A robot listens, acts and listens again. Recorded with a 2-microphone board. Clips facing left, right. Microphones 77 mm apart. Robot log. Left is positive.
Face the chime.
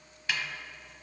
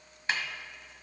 cmd idle
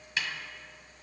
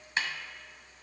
cmd idle
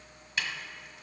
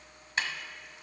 end: I can't make out a chime, only a snare drum.